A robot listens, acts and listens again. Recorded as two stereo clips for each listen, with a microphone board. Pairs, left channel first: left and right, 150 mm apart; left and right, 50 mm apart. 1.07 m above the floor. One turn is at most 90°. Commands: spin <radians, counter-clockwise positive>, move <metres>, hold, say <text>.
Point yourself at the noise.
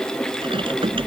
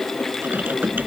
spin -0.61
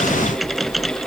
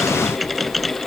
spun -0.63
say Facing the typing on a keyboard.